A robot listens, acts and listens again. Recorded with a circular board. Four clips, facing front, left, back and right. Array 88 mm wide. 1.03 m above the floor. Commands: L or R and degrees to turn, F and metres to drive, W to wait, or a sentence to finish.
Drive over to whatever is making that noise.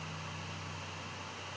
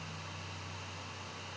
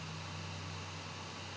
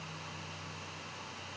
W
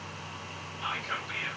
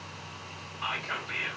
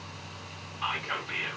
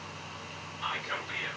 L155
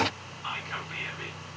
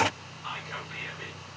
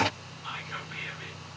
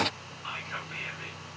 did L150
F1.0
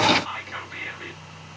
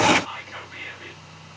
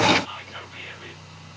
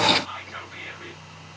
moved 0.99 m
L10
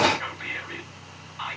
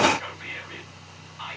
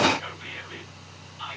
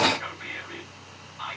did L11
F1.0
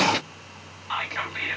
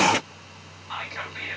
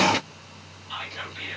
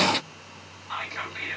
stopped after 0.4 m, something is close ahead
I am next to the whispering.